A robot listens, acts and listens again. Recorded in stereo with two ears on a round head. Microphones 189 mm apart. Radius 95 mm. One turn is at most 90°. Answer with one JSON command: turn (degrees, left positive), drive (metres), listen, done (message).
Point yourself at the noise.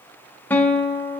{"turn": 30}
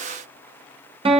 {"turn": -25}
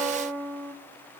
{"turn": -20}
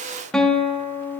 {"done": "Facing the guitar, 1 to 2 m away."}